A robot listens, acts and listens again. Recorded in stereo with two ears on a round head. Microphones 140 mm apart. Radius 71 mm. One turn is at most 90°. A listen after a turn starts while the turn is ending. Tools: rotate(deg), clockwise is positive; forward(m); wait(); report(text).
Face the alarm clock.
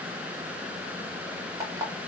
rotate(25)
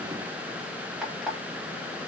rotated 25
report("Facing the alarm clock.")